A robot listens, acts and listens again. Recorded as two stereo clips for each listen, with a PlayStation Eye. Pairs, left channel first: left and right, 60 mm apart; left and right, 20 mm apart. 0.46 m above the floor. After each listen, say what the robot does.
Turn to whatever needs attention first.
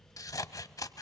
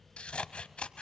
Keep listening.
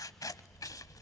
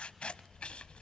Keep listening.
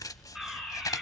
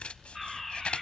Turn 30° right.
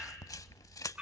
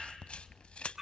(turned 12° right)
Turn 160° right.
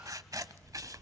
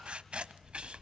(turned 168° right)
Keep listening.
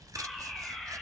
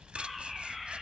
Facing the fire alarm, over 4 m away.